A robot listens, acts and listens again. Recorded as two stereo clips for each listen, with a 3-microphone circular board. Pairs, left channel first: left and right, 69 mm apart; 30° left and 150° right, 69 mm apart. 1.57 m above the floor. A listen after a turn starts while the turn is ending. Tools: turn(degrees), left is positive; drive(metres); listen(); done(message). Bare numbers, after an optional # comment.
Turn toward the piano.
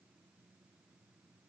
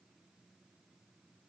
listen()
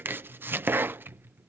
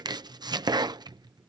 listen()
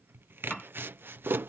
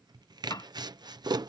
# The piano: 10° left.
turn(10)
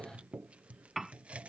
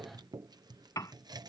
done("Found it: a piano, straight ahead.")